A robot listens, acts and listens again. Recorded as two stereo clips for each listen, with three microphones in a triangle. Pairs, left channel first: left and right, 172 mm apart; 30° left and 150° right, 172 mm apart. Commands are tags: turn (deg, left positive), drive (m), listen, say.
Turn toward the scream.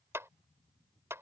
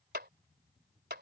<listen/>
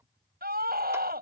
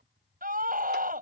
<turn deg="-115"/>
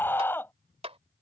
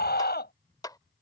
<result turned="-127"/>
<turn deg="10"/>
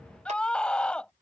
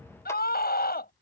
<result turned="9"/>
<say>Facing the scream.</say>